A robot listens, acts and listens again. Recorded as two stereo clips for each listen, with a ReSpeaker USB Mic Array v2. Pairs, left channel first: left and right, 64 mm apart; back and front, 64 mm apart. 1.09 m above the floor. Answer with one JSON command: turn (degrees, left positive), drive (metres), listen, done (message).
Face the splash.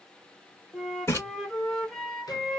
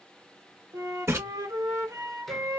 {"turn": 45}
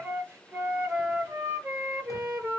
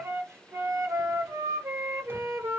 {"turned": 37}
{"turn": 10}
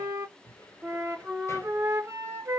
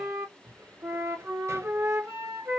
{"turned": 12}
{"done": "I heard a splash from this way, but can't make it out now."}